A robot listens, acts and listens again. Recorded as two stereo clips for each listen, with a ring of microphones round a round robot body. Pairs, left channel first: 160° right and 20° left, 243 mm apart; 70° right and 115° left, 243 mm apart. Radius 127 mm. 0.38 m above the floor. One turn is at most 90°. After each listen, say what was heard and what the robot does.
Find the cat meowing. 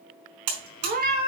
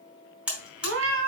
The cat meowing: 80° left. Turn 80° left.
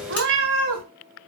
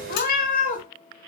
The cat meowing is now 10° right. Turn 10° right.
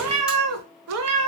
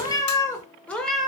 The cat meowing is now 25° left. Turn 25° left.
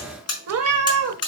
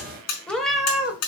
The cat meowing is now 30° left. Turn 30° left.
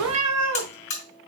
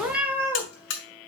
The cat meowing is now 35° left. Turn 35° left.
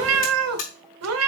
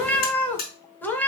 The cat meowing is now 15° left. Turn 15° left.
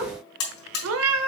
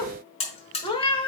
Facing the cat meowing.